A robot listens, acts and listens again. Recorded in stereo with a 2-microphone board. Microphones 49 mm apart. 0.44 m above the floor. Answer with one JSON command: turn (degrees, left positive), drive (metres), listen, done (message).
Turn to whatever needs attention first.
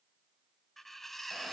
{"listen": true}
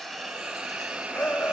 {"turn": 45}
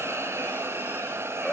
{"turn": 15}
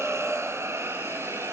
{"listen": true}
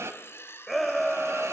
{"done": "Found it: a shout, straight ahead, 2 to 4 m away."}